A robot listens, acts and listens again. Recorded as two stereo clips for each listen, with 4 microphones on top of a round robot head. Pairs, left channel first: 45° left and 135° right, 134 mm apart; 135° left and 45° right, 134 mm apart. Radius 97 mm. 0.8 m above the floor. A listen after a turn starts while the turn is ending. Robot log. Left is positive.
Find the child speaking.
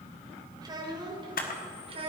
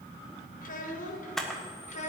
note: The child speaking: 175° left.
cmd yaw +175
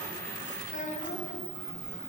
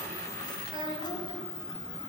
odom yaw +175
note: The child speaking is now 15° left.
cmd yaw +15
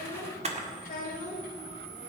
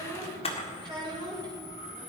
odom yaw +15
note: The child speaking is now 15° left.
cmd yaw +15
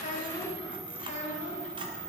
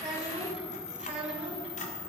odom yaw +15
end: Found it: a child speaking, straight ahead, 2 to 4 m away.